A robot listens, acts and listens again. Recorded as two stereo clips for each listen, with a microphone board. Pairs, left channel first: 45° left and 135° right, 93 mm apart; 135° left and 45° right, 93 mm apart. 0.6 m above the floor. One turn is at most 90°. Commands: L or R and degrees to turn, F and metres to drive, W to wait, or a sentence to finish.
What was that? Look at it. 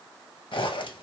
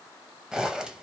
L35
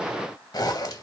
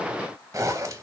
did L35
Facing the zipper, under 1 m away.